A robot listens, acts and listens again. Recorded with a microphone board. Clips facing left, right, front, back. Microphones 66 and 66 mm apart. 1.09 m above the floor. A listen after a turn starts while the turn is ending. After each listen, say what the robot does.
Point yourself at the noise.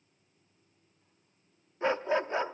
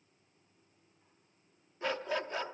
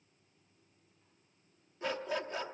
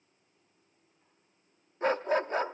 Turn 145° left.
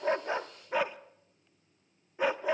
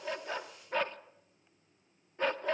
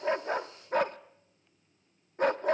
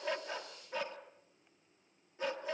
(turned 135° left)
Turn 10° left.
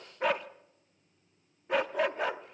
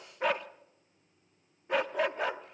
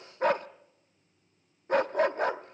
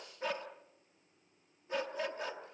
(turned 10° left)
Found it: a dog barking, straight ahead, under 1 m away.